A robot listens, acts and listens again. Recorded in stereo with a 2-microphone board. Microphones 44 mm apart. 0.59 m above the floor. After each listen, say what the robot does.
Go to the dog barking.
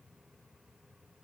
Keep listening.
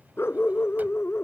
Turn 75° left.
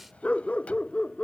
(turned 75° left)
Turn 30° left.
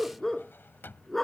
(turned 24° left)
Drive 1.0 m forward.
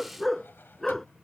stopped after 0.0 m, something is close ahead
Blocked. The dog barking is further on, straight ahead.